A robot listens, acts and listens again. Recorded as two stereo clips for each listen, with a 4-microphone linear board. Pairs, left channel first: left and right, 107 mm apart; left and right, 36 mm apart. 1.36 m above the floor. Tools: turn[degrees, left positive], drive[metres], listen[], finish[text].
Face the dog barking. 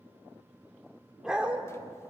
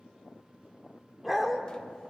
Action: turn[-30]
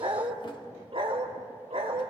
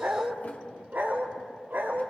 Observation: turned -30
Thought: So it is at 110° right.
Action: turn[-110]
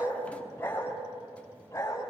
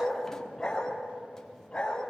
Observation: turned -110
Thought: The dog barking is now 25° left.
Action: turn[25]
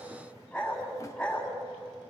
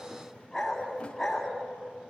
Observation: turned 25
Action: finish[Found it: a dog barking, straight ahead, 2 to 4 m away.]